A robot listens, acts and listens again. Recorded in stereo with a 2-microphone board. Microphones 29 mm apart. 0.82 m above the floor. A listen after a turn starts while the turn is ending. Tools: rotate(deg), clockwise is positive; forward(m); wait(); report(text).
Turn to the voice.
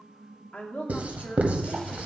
rotate(-65)
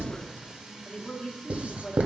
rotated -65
rotate(-45)
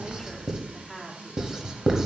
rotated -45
report("Found it: a woman speaking, straight ahead, 1 to 2 m away.")